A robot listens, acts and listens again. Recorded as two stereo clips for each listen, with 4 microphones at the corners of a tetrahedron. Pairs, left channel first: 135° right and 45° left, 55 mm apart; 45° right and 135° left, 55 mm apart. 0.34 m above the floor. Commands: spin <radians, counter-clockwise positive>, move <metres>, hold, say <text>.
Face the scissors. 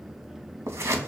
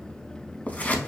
spin 0.26
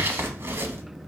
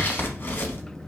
say Found it: scissors, straight ahead.